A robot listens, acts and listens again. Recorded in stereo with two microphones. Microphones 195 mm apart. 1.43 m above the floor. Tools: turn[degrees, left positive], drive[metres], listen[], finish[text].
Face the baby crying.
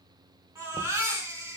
Action: turn[-30]
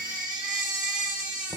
Thought: So it is at 135° right.
Action: turn[-135]
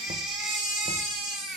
Action: finish[Found it: a baby crying, straight ahead.]